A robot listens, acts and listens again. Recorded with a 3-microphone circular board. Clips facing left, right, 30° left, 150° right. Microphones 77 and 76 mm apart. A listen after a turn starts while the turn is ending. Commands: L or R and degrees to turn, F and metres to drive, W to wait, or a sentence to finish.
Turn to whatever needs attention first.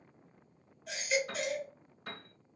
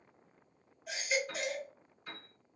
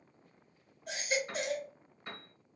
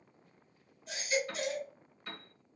Found it: a baby crying, straight ahead, 1 to 2 m away.